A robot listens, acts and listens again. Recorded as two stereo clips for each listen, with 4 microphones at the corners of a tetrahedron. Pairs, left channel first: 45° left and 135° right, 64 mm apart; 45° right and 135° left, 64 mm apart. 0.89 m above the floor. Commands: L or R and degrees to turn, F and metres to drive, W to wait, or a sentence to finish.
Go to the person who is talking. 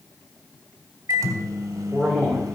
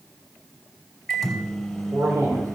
L115
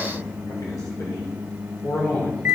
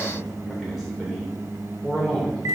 L50
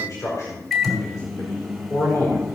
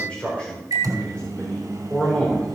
L25
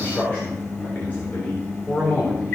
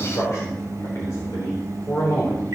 R10
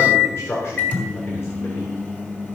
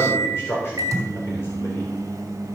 F1.0
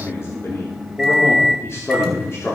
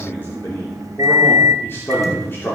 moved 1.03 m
F1.0
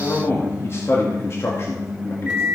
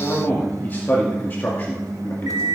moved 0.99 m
L10
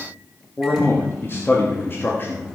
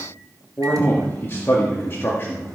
F1.0
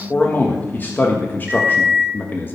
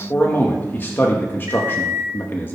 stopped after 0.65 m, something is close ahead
I am next to the man speaking.